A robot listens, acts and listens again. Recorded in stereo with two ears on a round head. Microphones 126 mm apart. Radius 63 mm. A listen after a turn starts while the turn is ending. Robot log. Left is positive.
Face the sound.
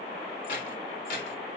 note: The keys jangling: about 60° left or 120° left.
cmd yaw +60
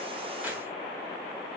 cmd idle
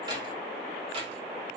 note: So it is at 50° right.
cmd yaw -50
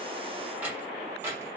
note: The keys jangling is now 20° right.
cmd yaw -20
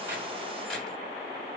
end: Facing the keys jangling.